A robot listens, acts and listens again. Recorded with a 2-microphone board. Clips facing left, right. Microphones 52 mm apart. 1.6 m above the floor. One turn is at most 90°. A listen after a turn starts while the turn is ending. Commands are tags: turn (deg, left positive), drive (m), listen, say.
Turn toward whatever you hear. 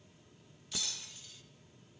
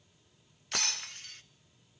<turn deg="-60"/>
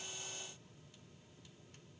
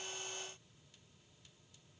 <listen/>
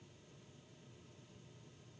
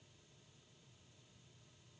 <say>I heard breaking glass, but can't make it out now. It was about straight ahead or 60° right.</say>